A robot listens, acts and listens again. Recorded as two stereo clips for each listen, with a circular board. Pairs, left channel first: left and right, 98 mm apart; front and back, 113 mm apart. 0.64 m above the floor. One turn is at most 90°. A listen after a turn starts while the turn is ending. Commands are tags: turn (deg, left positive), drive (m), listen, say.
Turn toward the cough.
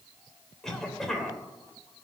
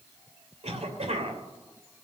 <turn deg="90"/>
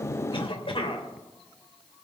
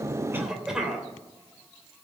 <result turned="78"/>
<turn deg="90"/>
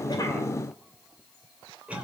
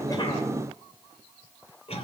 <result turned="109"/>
<turn deg="-15"/>
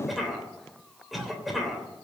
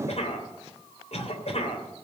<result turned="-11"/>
<say>Facing the cough.</say>